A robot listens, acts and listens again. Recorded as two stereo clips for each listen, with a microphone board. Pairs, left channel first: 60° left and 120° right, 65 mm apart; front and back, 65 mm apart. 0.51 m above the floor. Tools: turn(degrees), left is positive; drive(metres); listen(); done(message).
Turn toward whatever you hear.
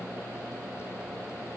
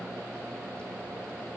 listen()
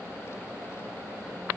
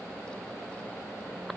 listen()
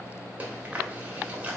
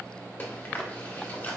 turn(degrees=-55)
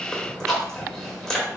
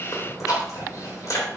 turn(degrees=-20)
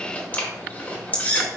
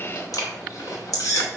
done("Facing the chewing.")